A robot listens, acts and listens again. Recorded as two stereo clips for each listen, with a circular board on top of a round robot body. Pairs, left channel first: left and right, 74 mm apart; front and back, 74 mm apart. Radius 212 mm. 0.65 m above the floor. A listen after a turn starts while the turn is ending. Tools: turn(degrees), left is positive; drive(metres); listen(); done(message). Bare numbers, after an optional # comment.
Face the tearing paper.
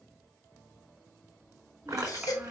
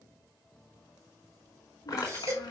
# The tearing paper: 45° right.
turn(-45)
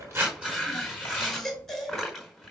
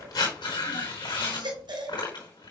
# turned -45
done("Facing the tearing paper, over 4 m away.")